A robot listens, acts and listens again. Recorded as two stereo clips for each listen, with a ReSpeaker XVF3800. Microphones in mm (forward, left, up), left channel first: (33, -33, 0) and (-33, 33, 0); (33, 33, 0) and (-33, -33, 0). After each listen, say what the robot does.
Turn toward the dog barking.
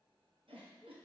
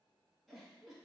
Keep listening.
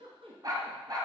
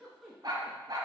Turn 175° left.
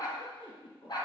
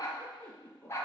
Turn 15° right.
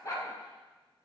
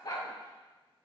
Facing the dog barking.